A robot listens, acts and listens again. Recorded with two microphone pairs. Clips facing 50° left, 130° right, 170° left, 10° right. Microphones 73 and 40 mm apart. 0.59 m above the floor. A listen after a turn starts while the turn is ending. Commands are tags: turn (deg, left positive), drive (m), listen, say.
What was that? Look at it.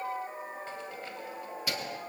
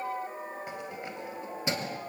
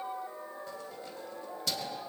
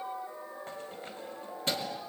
<turn deg="-65"/>
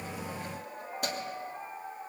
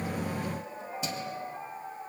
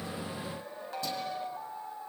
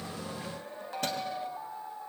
<listen/>
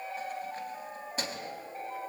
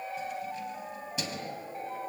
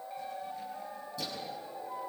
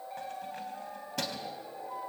<say>Facing the keys jangling.</say>